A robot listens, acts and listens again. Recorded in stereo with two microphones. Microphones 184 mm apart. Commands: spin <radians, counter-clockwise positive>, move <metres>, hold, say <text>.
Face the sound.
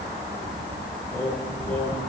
spin 0.52
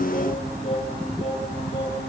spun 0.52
spin 2.62
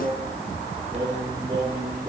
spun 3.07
spin -0.35
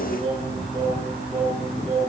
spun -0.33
say Found it: singing, straight ahead, over 4 m away.